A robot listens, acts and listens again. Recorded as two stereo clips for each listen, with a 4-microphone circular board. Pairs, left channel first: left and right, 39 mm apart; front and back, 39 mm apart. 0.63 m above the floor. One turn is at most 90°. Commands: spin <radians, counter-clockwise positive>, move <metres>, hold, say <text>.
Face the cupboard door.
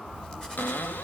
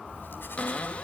spin 0.96
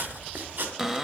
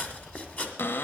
say Facing the cupboard door.